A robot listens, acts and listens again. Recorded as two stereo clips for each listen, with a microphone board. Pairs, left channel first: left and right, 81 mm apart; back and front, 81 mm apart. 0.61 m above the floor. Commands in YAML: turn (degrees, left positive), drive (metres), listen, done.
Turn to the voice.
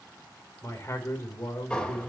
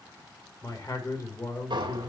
turn: 145
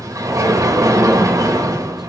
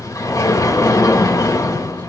listen: true
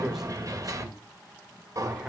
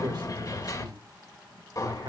done: "Facing the man speaking."